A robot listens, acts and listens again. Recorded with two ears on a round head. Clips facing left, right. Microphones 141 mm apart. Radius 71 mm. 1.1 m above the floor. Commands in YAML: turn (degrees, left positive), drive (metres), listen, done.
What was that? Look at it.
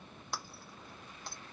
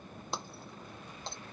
turn: -20
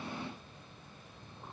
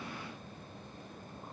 listen: true
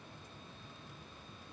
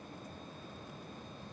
done: "I heard breaking glass, but can't make it out now. It was about straight ahead or 140° right."